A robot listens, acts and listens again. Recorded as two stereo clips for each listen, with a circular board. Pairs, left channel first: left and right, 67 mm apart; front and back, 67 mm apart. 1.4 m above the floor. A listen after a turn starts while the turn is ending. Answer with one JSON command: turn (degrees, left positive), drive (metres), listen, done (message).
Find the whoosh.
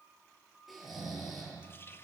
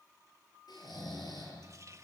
{"listen": true}
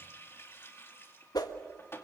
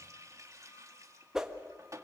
{"turn": 100}
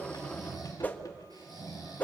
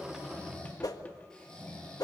{"turn": 25}
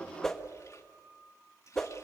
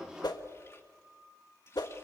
{"done": "Found it: a whoosh, straight ahead, 1 to 2 m away."}